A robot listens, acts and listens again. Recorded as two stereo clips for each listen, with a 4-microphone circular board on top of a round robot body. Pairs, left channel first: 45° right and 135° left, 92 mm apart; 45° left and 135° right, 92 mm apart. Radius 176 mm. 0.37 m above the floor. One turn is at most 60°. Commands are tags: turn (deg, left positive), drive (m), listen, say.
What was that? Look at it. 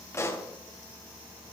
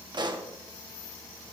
<turn deg="-60"/>
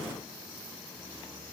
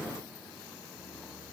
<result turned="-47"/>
<turn deg="-55"/>
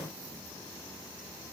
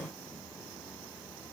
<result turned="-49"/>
<say>I heard a pop from this way, but can't make it out now.</say>